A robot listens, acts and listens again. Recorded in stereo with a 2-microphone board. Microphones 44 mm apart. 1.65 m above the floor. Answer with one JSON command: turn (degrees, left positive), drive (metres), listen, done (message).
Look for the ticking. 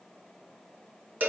{"listen": true}
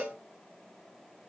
{"listen": true}
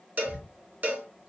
{"turn": -30}
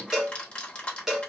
{"turn": 30}
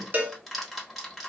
{"done": "Facing the ticking, 1 to 2 m away."}